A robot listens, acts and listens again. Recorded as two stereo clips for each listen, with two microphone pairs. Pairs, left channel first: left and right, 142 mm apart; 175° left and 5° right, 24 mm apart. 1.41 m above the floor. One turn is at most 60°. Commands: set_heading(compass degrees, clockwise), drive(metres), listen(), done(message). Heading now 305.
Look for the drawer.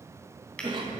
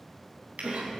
done("Facing the drawer.")